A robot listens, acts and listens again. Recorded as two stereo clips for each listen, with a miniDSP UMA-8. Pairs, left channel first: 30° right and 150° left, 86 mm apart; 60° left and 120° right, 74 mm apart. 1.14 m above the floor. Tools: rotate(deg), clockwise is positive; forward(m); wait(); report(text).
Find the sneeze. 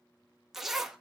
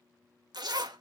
wait()
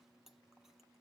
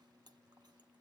wait()
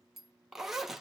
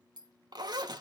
report("I can't make out a sneeze to turn to.")